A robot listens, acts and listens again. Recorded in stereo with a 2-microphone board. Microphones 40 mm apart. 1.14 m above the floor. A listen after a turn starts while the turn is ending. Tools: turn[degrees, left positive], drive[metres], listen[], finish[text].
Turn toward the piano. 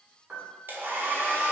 Thought: The piano: about 25° right or 155° right.
Action: turn[-25]
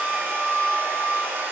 Action: listen[]
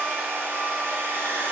Action: listen[]
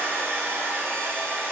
Action: finish[I heard a piano, but can't make it out now. It was about straight ahead or 130° right.]